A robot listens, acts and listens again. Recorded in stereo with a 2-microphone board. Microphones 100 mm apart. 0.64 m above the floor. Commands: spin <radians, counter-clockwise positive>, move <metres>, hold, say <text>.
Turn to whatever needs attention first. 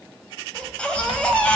spin 0.52
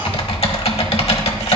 hold
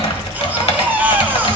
spin -0.35
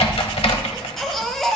say Facing the baby crying, 1 to 2 m away.